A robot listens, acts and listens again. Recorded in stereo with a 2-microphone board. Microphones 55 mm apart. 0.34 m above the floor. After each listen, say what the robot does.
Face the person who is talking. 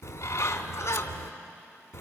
Keep listening.
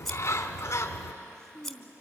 Turn 55° right.
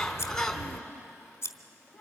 Turn 10° right.
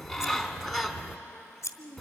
Facing the child speaking.